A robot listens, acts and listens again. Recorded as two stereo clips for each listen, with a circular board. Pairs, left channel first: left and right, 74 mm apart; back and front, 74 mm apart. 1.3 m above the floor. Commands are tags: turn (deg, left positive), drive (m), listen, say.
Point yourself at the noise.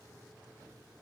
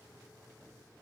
<listen/>
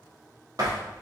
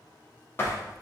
<turn deg="-125"/>
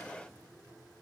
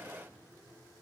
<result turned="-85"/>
<turn deg="-40"/>
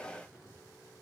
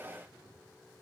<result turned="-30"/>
<turn deg="-10"/>
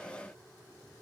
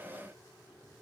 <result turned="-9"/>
<say>Facing where the door slam came from. I can't hear it now.</say>